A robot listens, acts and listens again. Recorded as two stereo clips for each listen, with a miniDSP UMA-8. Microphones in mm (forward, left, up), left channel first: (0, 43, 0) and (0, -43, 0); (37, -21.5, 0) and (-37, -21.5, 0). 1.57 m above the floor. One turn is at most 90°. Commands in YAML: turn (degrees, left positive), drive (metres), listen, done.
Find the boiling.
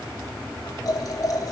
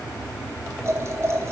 turn: 90
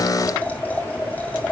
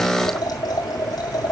turn: 20
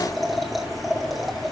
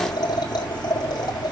done: "Facing the boiling, 2 to 4 m away."